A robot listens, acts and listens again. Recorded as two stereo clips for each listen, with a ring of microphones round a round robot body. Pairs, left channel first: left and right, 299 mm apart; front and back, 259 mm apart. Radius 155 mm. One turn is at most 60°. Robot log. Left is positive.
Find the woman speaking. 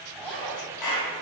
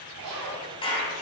cmd idle
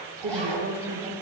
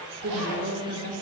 note: The woman speaking: 150° right.
cmd yaw -60
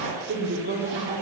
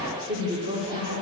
note: The woman speaking is now 135° right.
cmd yaw -60
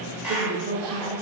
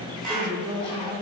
note: The woman speaking is now 115° right.
cmd yaw -60
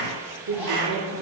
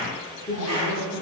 note: The woman speaking is now 75° right.
cmd yaw -60
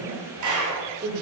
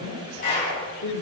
note: The woman speaking is now 30° right.
cmd yaw -30
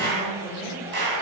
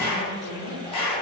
end: Found it: a woman speaking, straight ahead, 1 to 2 m away.